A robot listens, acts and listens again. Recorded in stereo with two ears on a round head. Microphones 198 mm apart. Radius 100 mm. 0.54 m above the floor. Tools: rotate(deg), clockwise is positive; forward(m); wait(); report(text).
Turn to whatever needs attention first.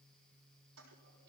wait()
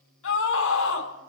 rotate(-70)
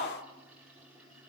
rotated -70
rotate(-35)
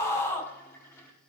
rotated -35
rotate(-15)
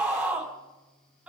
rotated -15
report("Found it: a scream, straight ahead.")